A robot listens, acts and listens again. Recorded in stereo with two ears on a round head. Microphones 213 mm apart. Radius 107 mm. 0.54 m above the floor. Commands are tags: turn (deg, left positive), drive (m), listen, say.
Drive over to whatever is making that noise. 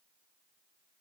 <listen/>
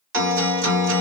<turn deg="-50"/>
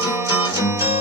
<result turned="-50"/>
<turn deg="-15"/>
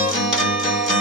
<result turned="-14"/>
<drive m="1.0"/>
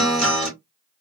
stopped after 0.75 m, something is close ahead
<say>I am next to the guitar.</say>